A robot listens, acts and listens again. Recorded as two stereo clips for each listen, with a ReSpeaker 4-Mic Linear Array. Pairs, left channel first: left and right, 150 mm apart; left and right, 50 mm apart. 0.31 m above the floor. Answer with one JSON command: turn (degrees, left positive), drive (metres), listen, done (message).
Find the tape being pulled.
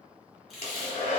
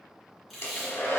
{"turn": 30}
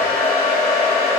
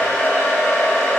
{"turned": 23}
{"listen": true}
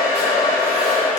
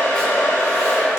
{"listen": true}
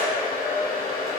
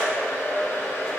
{"done": "I heard tape being pulled, but can't make it out now. It was about 20° right or 155° left."}